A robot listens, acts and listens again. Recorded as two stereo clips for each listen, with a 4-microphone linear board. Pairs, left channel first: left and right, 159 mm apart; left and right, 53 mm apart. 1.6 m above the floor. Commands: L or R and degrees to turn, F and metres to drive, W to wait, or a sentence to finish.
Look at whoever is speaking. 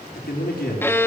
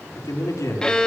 L75
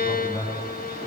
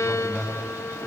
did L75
L30
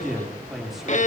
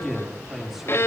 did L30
Facing the man speaking.